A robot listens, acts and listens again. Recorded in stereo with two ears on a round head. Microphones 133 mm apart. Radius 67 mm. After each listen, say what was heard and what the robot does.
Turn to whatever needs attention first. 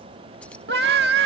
Turn 90° right.
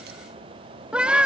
So it is at 10° right. Turn 10° right.
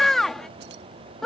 Facing the scream.